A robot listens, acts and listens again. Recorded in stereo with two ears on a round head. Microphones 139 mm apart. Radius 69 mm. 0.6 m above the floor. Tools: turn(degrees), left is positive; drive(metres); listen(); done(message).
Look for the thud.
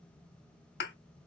turn(degrees=70)
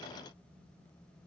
listen()
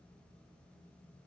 done("I heard a thud, but can't make it out now. It was about straight ahead or 40° left.")